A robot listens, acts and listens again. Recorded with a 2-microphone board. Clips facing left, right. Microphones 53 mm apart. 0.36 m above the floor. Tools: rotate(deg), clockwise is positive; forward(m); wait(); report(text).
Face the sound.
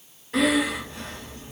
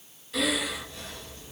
rotate(-40)
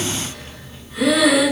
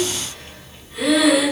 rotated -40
report("Found it: breathing, straight ahead, 2 to 4 m away.")